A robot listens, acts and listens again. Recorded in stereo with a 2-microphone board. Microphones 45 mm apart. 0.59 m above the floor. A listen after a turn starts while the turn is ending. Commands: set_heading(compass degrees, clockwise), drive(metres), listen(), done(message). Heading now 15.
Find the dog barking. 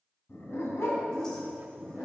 set_heading(285)
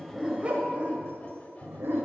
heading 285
set_heading(350)
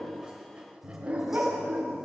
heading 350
set_heading(35)
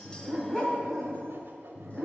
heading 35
done("Facing the dog barking, 1 to 2 m away.")